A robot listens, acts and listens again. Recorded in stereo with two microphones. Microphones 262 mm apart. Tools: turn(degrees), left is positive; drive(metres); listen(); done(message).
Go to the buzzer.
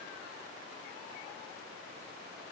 listen()
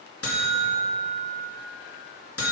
turn(degrees=60)
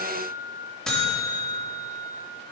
drive(metres=1.0)
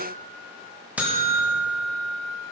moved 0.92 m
drive(metres=1.0)
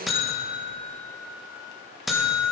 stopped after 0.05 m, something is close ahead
done("I am next to the buzzer.")